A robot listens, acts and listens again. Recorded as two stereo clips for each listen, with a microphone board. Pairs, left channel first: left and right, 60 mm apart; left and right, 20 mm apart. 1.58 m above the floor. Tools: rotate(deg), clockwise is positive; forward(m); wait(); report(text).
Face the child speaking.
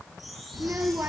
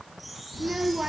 rotate(35)
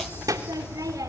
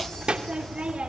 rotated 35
rotate(110)
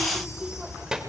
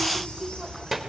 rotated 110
rotate(10)
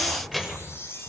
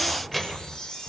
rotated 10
report("Facing the child speaking.")